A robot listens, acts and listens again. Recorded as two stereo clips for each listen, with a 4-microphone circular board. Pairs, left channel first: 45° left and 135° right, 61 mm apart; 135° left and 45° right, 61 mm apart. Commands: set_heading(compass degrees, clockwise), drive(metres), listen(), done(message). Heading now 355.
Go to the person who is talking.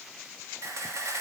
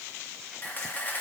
listen()
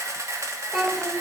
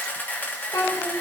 set_heading(215)
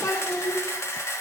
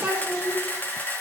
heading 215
set_heading(190)
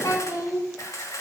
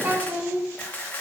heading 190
set_heading(175)
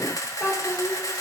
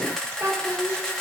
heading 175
drive(1.0)
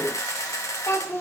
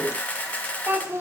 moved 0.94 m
drive(1.0)
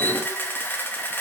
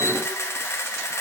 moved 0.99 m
listen()
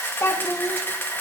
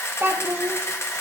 drive(1.0)
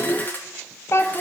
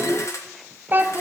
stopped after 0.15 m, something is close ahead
done("I am next to the child speaking.")